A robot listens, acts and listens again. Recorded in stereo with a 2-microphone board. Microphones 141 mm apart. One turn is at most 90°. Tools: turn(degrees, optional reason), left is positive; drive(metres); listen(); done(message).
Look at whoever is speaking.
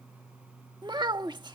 turn(degrees=-30, reason="The child speaking: about 30° right or 150° right.")
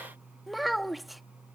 done("Found it: a child speaking, straight ahead.")